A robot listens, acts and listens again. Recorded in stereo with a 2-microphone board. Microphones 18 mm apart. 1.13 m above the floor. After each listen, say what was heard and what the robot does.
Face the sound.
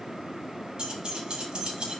The keys jangling: about 55° right or 125° right. Turn 55° right.
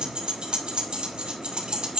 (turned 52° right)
So it is at 60° right. Turn 60° right.
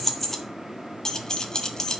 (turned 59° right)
The keys jangling is now 35° left. Turn 35° left.
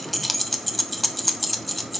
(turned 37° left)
Facing the keys jangling.